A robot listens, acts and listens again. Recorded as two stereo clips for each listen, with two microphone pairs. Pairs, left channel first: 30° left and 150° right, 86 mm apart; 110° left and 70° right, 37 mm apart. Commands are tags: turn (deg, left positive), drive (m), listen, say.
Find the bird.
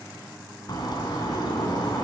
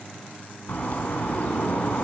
<turn deg="65"/>
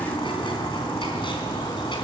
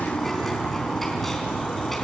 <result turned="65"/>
<turn deg="25"/>
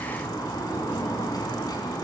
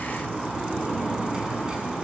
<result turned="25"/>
<say>Facing the bird.</say>